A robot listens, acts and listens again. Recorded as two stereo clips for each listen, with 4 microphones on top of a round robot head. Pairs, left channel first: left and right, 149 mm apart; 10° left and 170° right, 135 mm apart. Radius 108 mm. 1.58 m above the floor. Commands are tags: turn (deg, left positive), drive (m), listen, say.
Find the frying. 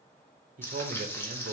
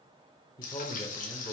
<turn deg="15"/>
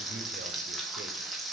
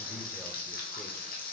<say>Found it: frying, straight ahead.</say>